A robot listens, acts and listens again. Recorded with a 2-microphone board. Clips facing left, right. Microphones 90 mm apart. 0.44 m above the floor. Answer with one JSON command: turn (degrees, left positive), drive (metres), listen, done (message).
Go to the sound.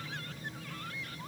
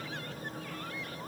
{"listen": true}
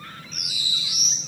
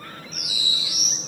{"turn": -30}
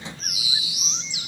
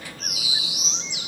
{"turn": 20}
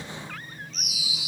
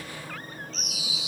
{"drive": 1.0}
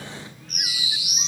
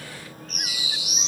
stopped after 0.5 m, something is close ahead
{"done": "Something is in my way. I am facing the bird but have not reached it."}